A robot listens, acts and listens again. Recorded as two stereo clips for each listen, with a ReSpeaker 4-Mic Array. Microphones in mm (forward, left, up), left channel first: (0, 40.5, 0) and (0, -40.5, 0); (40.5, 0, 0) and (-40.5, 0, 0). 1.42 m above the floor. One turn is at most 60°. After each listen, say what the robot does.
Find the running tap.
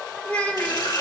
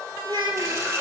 Turn 60° left.
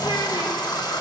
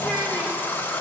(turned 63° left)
Turn 60° left.
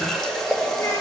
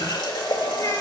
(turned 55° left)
Turn 10° left.
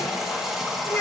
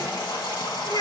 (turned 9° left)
Facing the running tap, 1 to 2 m away.